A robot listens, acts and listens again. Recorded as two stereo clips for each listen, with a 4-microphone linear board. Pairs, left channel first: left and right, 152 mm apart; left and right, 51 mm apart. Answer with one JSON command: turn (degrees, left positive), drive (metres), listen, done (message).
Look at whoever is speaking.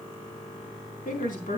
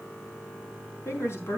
{"turn": 65}
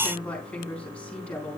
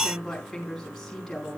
{"turn": 10}
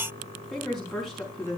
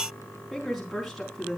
{"done": "Facing the woman speaking."}